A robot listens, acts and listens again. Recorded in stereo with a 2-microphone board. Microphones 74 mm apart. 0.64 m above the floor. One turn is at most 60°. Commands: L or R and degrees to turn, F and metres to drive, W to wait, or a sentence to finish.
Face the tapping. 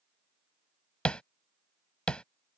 L30
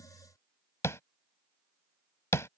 L60
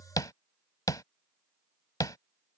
L60
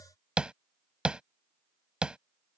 R15
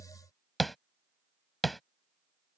Found it: tapping, straight ahead.